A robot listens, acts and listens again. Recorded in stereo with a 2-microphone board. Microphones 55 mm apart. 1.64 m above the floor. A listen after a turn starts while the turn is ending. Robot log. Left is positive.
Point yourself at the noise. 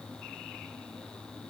cmd idle
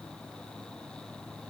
cmd idle
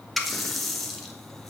cmd yaw +30
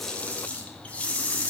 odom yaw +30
note: So it is at 150° left.
cmd yaw +150
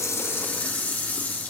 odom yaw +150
note: The running tap is now 40° left.
cmd yaw +40
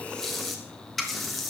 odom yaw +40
end: Found it: a running tap, straight ahead, 1 to 2 m away.